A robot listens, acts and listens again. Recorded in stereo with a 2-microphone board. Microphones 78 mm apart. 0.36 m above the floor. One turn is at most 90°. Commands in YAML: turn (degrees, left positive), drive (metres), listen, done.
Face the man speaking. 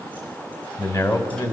turn: 50
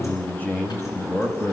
turn: 30
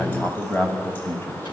turn: 30
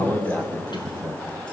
turn: 35
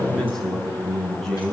done: "Facing the man speaking."